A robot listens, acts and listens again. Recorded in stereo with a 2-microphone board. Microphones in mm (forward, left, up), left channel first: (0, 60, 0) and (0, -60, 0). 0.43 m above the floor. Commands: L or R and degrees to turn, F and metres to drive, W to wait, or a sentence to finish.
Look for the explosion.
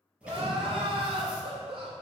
R30
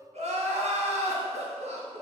W
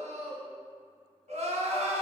I heard an explosion, but can't make it out now. It was about 20° left or 140° right.